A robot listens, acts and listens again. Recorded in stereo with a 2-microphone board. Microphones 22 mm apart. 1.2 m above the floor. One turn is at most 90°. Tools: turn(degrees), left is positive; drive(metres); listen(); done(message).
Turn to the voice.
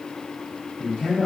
turn(degrees=55)
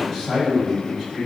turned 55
done("Found it: a man speaking, straight ahead.")